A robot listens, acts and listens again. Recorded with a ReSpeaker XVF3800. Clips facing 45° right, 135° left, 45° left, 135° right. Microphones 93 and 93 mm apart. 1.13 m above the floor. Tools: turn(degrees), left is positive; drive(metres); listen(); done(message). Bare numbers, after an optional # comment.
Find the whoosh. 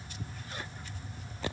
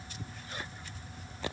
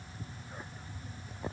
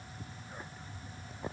listen()
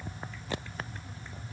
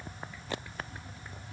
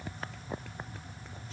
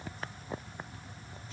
listen()
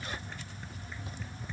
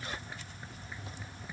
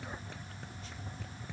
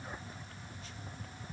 done("I can't make out a whoosh to turn to.")